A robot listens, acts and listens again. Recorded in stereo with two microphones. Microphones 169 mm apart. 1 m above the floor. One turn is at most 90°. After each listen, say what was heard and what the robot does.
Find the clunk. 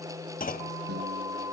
The clunk: about 55° left or 125° left. Turn 55° left.
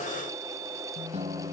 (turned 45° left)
Keep listening.
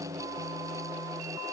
I heard a clunk, but can't make it out now. It was about 10° left or 80° left.